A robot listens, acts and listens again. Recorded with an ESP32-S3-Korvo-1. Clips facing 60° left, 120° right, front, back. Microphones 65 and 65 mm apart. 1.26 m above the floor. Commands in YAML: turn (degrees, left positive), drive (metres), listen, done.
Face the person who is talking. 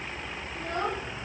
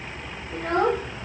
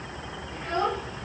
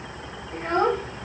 turn: -125
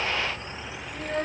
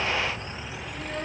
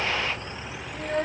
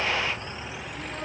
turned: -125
turn: 10
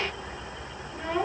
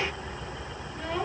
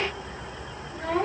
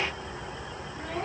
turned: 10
done: "Found it: a child speaking, straight ahead, 1 to 2 m away."